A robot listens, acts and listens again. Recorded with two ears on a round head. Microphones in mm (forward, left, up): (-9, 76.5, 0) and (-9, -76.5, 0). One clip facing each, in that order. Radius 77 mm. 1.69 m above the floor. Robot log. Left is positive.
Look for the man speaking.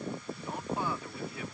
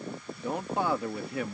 note: The man speaking: about 55° right or 125° right.
cmd yaw -55
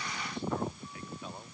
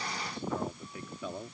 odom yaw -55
note: So it is at 70° right.
cmd yaw -70
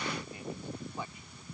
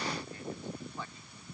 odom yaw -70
cmd idle
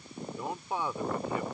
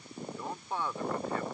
note: The man speaking is now 10° left.
cmd yaw +10
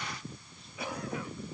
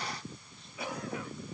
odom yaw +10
cmd idle
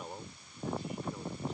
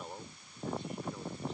end: Found it: a man speaking, straight ahead.